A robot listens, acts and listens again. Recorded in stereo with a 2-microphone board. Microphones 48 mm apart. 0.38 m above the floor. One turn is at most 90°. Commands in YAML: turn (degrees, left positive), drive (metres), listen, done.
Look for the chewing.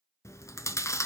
turn: 70
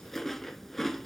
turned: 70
done: "Found it: chewing, straight ahead."